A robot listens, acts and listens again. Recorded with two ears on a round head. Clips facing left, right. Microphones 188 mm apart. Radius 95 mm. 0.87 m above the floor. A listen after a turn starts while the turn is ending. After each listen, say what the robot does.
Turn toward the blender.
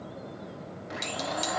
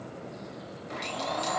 Turn 30° left.
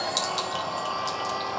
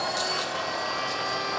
Turn 25° right.
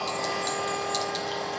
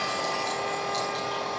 Found it: a blender, straight ahead.